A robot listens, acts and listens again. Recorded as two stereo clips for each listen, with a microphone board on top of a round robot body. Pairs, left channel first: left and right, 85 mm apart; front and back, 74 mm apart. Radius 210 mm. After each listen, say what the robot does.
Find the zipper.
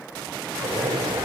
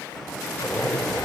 Turn 85° right.
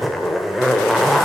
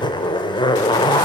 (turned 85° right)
Found it: a zipper, straight ahead.